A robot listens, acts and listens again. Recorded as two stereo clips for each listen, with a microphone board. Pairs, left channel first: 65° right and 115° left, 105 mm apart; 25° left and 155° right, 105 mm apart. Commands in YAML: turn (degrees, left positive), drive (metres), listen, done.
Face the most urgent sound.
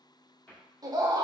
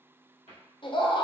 turn: 60
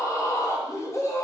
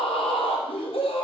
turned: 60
done: "Facing the scream."